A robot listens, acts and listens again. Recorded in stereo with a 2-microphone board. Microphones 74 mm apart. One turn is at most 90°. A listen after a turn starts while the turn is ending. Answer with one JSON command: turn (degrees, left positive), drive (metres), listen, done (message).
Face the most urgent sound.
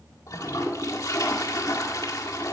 {"listen": true}
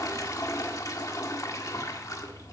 {"listen": true}
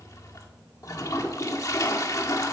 {"done": "I can't make out anything urgent, only a toilet flushing."}